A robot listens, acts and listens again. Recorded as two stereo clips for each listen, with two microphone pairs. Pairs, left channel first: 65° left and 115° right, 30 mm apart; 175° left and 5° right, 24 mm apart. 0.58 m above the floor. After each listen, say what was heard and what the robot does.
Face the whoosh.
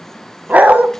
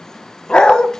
Keep listening.
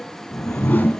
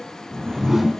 The whoosh: 75° left. Turn 75° left.
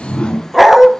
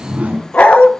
The whoosh is now 15° left. Turn 15° left.
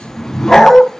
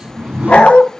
Found it: a whoosh, straight ahead.